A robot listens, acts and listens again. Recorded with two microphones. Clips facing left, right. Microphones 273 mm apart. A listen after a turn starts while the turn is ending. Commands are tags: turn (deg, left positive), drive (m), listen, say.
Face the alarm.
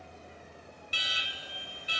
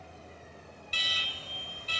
<turn deg="30"/>
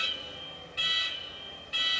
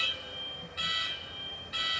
<turn deg="140"/>
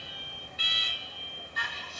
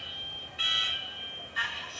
<turn deg="50"/>
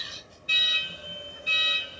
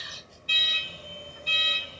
<turn deg="10"/>
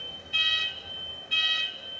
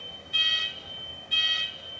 <say>Found it: an alarm, straight ahead, 1 to 2 m away.</say>